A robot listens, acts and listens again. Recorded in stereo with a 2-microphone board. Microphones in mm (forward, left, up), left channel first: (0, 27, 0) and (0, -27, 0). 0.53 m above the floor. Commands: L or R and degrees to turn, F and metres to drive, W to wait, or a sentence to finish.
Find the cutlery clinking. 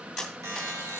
L30
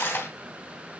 L145
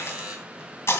L60
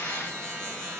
W
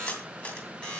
L35
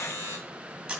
R20
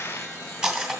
Found it: cutlery clinking, straight ahead, 2 to 4 m away.